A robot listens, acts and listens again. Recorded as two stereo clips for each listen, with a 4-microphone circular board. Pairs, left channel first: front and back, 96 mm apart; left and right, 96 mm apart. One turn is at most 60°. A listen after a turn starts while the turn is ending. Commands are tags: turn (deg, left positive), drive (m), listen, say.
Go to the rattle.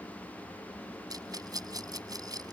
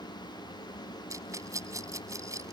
<turn deg="-60"/>
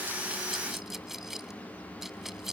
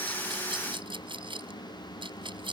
<turn deg="-60"/>
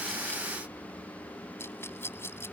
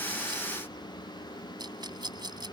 <turn deg="-60"/>
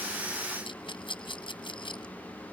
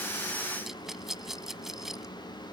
<drive m="1.0"/>
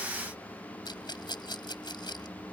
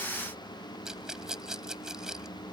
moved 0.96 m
<turn deg="-10"/>
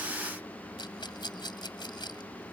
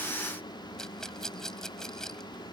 <drive m="1.0"/>
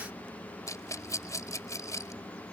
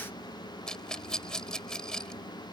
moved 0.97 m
<turn deg="10"/>
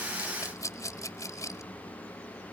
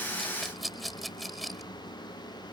<drive m="1.0"/>
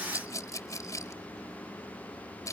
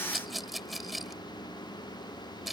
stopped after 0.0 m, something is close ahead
<say>I am next to the rattle.</say>